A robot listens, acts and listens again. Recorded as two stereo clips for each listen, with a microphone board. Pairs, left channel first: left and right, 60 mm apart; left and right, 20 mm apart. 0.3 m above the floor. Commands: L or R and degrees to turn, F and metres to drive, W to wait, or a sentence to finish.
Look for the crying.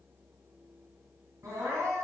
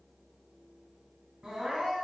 R65
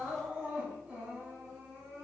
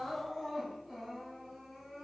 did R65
R25
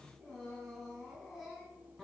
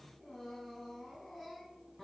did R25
Found it: crying, straight ahead.